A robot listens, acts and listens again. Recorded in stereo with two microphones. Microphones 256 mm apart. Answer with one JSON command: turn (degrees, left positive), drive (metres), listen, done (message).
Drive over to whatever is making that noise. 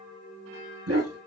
{"turn": -65}
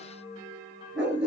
{"drive": 1.0}
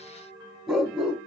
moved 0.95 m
{"drive": 1.0}
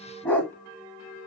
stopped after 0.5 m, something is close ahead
{"done": "I am next to the dog barking."}